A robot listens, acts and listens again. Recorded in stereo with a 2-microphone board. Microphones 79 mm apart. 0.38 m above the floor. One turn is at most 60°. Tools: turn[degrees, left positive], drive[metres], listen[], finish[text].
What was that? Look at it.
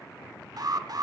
Thought: The alarm: about 55° right or 125° right.
Action: turn[-55]
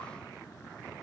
Action: listen[]
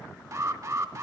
Thought: So it is at 45° right.
Action: turn[-45]
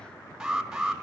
Thought: The alarm is now 10° right.
Action: turn[-10]
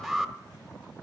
Action: finish[Found it: an alarm, straight ahead.]